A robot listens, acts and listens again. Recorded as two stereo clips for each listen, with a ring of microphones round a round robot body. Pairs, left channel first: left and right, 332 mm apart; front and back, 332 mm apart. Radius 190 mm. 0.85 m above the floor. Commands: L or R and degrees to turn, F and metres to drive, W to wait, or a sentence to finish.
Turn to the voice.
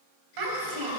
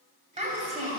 R110
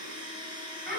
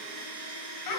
R25
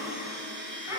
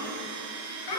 Facing the child speaking.